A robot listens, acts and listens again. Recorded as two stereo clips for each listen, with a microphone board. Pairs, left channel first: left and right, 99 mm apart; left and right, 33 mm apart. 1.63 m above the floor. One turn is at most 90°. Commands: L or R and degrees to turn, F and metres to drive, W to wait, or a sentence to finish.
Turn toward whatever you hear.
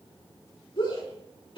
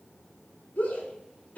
L55
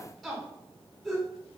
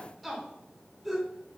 Facing the shout, over 4 m away.